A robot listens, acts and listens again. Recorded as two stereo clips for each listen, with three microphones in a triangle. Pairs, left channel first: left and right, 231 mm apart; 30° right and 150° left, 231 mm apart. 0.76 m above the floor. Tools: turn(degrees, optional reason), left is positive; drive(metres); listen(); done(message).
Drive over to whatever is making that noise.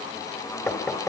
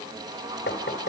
turn(degrees=10, reason="The knocking: 10° left.")
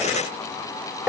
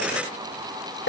drive(metres=1.0)
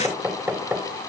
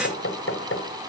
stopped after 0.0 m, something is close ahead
done("Blocked. The knocking is further on, straight ahead.")